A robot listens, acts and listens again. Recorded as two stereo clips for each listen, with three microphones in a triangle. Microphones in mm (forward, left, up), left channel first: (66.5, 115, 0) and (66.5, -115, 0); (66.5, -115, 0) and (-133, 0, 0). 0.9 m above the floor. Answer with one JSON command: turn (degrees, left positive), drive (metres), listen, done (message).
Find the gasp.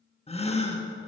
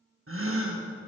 {"turn": 150}
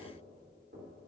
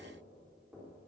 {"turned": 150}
{"done": "Facing where the gasp came from. I can't hear it now."}